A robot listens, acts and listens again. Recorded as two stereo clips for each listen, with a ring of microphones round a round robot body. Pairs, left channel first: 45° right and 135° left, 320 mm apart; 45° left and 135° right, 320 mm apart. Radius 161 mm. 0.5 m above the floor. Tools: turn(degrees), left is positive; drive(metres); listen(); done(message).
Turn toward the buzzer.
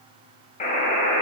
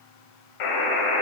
turn(degrees=20)
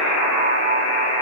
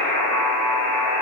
done("Facing the buzzer.")